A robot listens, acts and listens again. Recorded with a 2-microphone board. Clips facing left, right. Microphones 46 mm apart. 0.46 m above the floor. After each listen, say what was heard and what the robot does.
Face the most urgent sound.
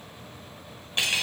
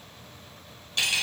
Keep listening.
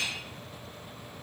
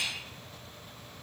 Keep listening.
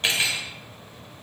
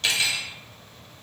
I can't make out anything urgent to turn to.